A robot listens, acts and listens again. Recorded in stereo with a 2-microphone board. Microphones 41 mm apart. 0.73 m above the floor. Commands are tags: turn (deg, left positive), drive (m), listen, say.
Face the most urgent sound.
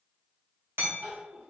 <turn deg="-55"/>
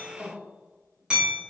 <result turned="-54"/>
<turn deg="-55"/>
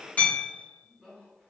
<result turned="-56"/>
<say>Facing the crying, 1 to 2 m away.</say>